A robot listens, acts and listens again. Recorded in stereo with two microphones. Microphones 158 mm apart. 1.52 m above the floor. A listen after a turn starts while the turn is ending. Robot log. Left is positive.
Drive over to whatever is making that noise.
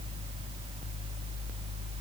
cmd idle
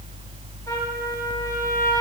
cmd idle
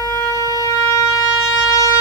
note: The trumpet: about 20° left or 160° left.
cmd yaw +20
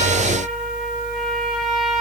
cmd fwd 1.0
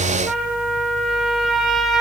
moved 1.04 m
cmd fwd 1.0
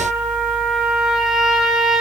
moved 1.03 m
cmd fwd 1.0
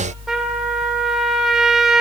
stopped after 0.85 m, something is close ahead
end: Arrived at the trumpet, straight ahead.